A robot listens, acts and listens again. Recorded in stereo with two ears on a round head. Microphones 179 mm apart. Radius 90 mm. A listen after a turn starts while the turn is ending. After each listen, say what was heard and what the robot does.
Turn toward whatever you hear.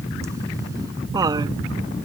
The laughter: about 20° right or 160° right. Turn 20° right.
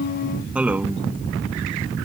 Turn 30° right.
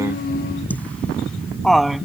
Found it: laughter, straight ahead.